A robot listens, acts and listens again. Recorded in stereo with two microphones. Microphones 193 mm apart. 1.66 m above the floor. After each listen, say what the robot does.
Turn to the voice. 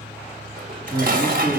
Turn 30° left.
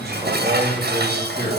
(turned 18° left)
Turn 25° right.
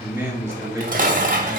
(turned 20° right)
Turn 15° right.
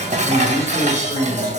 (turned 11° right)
Turn 20° right.
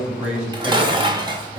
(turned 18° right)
Found it: a man speaking, straight ahead.